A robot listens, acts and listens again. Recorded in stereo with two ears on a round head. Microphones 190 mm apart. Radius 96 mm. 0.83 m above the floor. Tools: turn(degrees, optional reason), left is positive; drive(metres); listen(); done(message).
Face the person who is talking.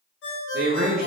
turn(degrees=-45, reason="The man speaking: about 45° right or 135° right.")
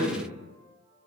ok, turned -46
done("Facing the man speaking, under 1 m away.")